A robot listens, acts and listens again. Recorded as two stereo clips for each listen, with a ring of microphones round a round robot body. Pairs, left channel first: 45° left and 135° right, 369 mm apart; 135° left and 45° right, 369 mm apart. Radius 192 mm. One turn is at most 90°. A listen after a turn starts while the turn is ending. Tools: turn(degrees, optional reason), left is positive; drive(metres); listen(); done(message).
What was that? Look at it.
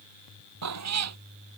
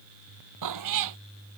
turn(degrees=-85, reason="The cat meowing: 85° right.")
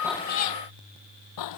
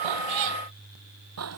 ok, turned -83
done("Facing the cat meowing.")